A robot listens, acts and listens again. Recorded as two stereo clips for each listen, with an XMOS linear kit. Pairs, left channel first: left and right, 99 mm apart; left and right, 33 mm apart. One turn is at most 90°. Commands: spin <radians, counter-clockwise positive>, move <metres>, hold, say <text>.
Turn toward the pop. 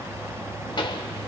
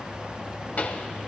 spin 0.96
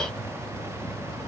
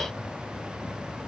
hold
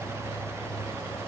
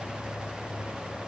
say I heard a pop, but can't make it out now. It was about straight ahead or 70° left.